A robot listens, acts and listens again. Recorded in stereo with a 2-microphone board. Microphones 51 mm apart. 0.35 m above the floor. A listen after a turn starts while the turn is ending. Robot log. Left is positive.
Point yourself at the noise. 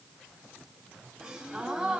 cmd yaw -30
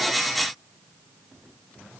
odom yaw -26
cmd idle
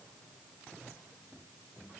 end: I heard a gasp, but can't make it out now. It was about 10° left or 140° right.